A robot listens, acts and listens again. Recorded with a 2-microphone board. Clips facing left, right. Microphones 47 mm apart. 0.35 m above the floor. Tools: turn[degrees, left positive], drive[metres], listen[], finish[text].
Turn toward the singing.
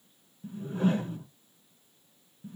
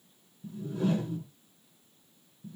Action: listen[]
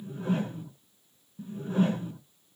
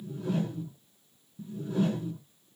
Action: listen[]
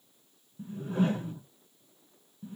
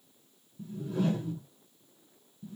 Action: finish[I can't make out singing, only a whoosh.]